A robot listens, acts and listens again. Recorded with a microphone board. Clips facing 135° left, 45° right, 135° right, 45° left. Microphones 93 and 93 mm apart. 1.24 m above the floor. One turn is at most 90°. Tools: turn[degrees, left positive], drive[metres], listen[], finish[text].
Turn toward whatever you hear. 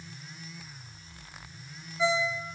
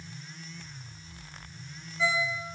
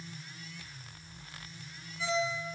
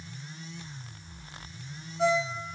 Thought: The ringtone: 65° left.
Action: turn[65]
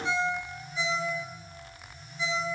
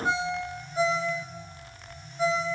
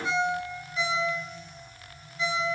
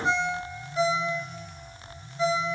Action: finish[Facing the ringtone, 2 to 4 m away.]